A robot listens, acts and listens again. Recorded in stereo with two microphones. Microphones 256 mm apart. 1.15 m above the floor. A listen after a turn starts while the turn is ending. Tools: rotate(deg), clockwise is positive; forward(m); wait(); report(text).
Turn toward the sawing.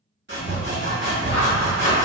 rotate(45)
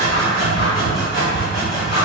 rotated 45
report("Facing the sawing.")